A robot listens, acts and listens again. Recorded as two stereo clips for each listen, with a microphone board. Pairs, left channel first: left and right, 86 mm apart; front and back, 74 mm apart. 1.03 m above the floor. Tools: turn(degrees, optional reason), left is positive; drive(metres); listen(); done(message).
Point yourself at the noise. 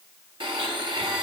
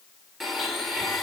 turn(degrees=-90, reason="The blender: 90° right.")
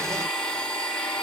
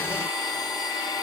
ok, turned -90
turn(degrees=10, reason="The blender is now 10° left.")
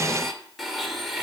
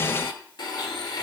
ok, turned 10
done("Found it: a blender, straight ahead.")